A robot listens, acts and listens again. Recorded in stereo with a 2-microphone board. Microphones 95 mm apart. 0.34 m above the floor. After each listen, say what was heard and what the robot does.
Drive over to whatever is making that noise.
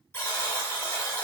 The buzzer: about 30° left or 150° left. Turn 30° left.
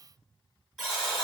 Drive 1.0 m forward.
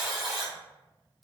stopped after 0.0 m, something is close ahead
Something is in my way. I am facing the buzzer but have not reached it.